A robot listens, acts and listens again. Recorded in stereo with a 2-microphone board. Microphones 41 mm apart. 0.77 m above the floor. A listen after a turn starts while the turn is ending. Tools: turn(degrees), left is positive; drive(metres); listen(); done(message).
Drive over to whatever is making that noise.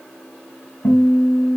turn(degrees=60)
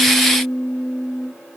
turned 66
turn(degrees=55)
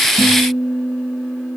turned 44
turn(degrees=10)
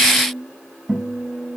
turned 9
drive(metres=1.0)
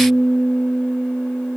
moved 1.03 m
drive(metres=1.0)
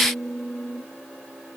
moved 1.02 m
drive(metres=1.0)
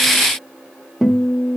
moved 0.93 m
drive(metres=1.0)
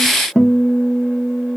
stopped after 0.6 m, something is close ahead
done("Arrived at the guitar, straight ahead.")